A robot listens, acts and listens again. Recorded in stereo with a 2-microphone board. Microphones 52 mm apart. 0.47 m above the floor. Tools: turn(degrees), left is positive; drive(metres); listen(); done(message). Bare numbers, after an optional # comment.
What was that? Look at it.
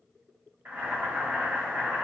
# The boiling: about 40° right or 140° right.
turn(-40)
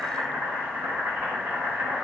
# So it is at 95° right.
turn(-95)
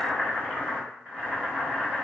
# The boiling is now 30° right.
turn(-30)
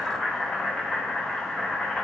done("Facing the boiling.")